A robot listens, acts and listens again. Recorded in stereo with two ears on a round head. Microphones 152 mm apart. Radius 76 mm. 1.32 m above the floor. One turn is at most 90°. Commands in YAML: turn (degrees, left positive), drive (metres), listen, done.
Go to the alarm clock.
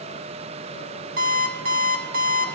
turn: -50
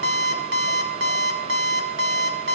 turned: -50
turn: -75
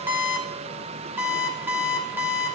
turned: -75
turn: -10
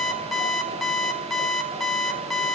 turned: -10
drive: 1.0
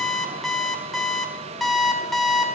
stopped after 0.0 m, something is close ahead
done: "Something is in my way. I am facing the alarm clock but have not reached it."